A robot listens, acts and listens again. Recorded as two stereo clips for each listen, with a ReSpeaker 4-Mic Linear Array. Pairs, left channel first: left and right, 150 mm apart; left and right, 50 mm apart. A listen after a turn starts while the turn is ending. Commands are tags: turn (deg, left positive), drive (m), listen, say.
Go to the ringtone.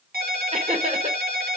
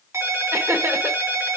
<turn deg="-90"/>
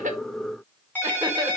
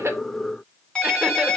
<turn deg="15"/>
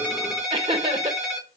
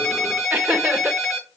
<drive m="1.0"/>
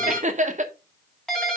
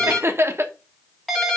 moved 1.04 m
<drive m="1.0"/>
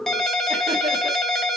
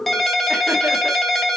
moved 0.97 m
<drive m="1.0"/>
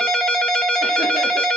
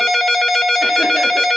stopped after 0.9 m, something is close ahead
<say>I am next to the ringtone.</say>